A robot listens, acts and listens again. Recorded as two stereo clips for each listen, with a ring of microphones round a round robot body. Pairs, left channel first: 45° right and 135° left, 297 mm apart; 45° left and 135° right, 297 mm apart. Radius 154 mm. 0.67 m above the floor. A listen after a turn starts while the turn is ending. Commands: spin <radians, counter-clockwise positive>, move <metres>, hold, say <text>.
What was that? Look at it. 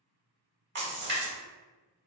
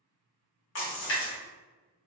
spin 1.48
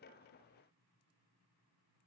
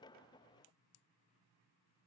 say I heard a splash from this way, but can't make it out now.